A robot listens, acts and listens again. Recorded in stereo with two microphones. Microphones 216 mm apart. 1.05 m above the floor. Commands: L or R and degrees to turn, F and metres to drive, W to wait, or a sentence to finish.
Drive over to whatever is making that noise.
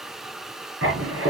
R75
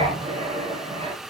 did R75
R25
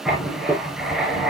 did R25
F1.0
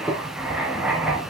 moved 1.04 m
F1.0
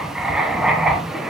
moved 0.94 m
F1.0
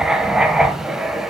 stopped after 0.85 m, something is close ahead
I am next to the writing.